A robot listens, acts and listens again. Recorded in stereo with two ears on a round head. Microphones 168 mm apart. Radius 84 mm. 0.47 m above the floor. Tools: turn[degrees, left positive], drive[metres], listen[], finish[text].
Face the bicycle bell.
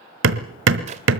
Action: listen[]
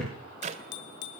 Thought: The bicycle bell: about 65° left or 115° left.
Action: turn[65]
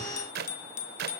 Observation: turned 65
Thought: So it is at 45° left.
Action: turn[45]
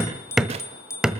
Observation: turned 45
Thought: The bicycle bell is now 15° left.
Action: turn[15]
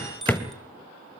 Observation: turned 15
Action: finish[Found it: a bicycle bell, straight ahead.]